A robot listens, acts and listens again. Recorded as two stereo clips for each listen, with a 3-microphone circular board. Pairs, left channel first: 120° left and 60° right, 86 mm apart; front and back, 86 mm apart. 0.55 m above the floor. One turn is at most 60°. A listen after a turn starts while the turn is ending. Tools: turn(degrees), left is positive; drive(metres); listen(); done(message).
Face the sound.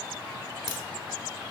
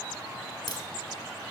turn(degrees=-35)
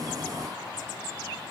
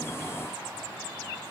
done("Facing where the crack came from. I can't hear it now.")